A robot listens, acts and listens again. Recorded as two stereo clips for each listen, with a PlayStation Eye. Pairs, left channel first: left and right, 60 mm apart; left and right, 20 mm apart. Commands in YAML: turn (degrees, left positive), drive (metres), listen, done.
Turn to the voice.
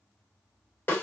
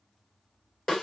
listen: true
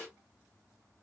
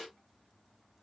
listen: true
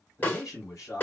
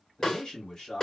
turn: 60
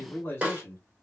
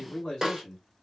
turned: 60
turn: 40
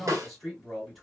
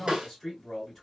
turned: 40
done: "Found it: a man speaking, straight ahead."